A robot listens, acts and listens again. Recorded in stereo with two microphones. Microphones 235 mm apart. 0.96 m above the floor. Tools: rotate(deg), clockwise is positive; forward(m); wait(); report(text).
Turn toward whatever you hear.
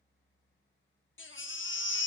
rotate(-55)
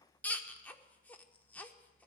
report("Facing the baby crying.")